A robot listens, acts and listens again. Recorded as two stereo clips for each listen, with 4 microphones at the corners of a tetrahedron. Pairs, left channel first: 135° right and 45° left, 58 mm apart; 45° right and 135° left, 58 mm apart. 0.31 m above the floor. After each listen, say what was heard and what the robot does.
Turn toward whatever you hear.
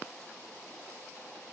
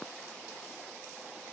Keep listening.
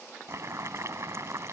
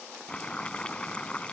The boiling: 25° left. Turn 25° left.
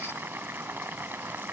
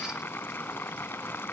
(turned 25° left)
Found it: boiling, straight ahead.